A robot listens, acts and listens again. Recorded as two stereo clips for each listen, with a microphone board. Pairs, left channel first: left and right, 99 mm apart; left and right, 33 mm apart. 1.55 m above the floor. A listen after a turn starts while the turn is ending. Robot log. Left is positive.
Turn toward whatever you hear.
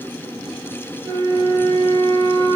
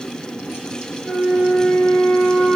note: The flute: about 45° right or 135° right.
cmd yaw -45
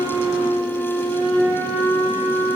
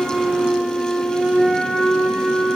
note: So it is at 85° right.
cmd yaw -85
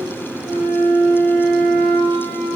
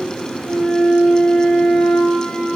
end: Facing the flute, 1 to 2 m away.